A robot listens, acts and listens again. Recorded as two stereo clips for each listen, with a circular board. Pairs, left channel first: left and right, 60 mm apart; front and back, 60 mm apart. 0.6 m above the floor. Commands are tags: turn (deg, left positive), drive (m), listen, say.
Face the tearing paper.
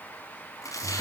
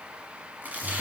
<turn deg="115"/>
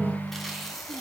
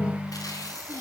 <listen/>
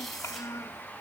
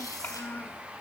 <listen/>
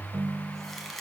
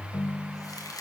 <say>Found it: tearing paper, straight ahead.</say>